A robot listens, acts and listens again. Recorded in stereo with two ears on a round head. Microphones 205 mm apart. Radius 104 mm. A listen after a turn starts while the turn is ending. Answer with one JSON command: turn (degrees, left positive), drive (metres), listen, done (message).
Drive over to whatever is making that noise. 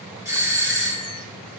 {"turn": -30}
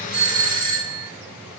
{"turn": -130}
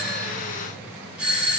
{"drive": 1.0}
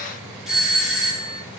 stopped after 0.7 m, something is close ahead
{"done": "I am next to the doorbell."}